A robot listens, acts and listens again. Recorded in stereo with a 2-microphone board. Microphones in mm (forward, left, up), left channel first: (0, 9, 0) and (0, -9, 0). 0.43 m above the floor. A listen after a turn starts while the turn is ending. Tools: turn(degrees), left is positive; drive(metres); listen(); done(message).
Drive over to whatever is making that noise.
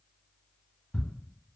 turn(degrees=25)
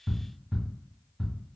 drive(metres=1.0)
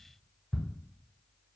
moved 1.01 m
drive(metres=1.0)
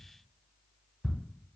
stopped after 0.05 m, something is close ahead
done("Arrived at the ticking, straight ahead.")